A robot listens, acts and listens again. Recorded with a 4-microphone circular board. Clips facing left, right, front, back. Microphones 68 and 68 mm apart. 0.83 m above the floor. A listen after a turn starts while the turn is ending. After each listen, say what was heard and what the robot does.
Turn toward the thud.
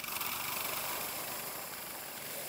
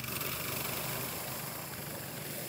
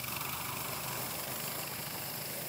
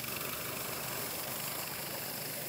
Keep listening.
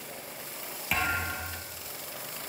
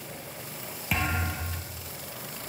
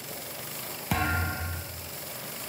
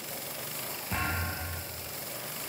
Found it: a thud, straight ahead, 2 to 4 m away.